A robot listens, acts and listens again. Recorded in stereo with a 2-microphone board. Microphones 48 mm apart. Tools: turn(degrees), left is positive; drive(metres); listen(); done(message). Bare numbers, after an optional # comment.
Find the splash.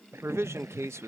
# The splash: about 60° right or 120° right.
turn(-60)
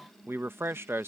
listen()
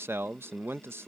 done("I heard a splash, but can't make it out now. It was about straight ahead or 60° right.")